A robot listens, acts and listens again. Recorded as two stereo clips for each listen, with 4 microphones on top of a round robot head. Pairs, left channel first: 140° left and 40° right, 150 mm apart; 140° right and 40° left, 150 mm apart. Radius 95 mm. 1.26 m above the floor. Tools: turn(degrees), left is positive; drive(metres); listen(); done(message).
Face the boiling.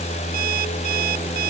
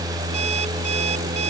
listen()
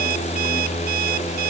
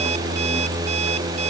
listen()
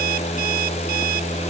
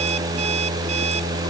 done("I can't make out boiling to turn to.")